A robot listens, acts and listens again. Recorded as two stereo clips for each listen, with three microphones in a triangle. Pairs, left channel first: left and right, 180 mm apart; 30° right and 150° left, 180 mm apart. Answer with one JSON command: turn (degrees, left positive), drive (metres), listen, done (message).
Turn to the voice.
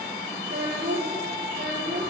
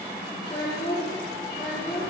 {"turn": -100}
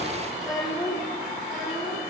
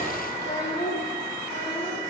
{"done": "Facing the child speaking, over 4 m away."}